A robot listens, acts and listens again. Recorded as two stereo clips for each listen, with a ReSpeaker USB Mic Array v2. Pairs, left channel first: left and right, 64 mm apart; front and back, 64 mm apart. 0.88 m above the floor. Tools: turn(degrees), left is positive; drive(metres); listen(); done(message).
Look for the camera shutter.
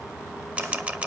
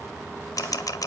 turn(degrees=-20)
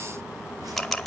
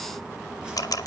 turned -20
done("Found it: a camera shutter, straight ahead.")